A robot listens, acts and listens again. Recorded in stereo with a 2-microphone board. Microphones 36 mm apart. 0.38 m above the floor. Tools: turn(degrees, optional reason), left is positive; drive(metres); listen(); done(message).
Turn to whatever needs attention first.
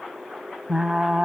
listen()
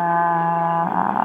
listen()
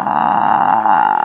done("I can't make out anything urgent to turn to.")